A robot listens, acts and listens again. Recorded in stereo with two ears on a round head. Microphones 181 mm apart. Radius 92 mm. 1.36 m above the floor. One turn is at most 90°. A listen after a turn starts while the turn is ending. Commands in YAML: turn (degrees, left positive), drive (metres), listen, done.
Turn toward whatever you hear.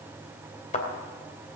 turn: 35
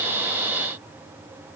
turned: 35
listen: true
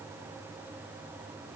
done: "I heard a thud, but can't make it out now. It was about straight ahead or 110° left."